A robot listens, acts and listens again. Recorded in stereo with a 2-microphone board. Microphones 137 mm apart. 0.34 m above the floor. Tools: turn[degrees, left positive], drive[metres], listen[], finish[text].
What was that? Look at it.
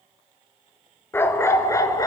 Thought: The dog barking: about 25° left or 155° left.
Action: turn[25]
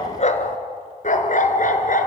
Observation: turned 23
Thought: So it is at 110° left.
Action: turn[110]
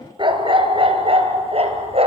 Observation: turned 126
Thought: The dog barking is now 45° right.
Action: turn[-45]
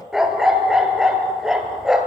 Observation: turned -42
Action: finish[Facing the dog barking.]